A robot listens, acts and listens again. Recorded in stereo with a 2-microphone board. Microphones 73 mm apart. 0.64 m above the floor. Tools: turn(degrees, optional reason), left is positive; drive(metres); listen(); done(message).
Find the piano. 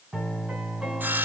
turn(degrees=-30)
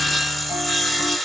listen()
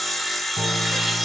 listen()
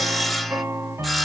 turn(degrees=-145, reason="So it is at 145° right.")
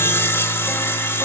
listen()
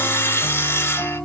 done("Facing the piano, 2 to 4 m away.")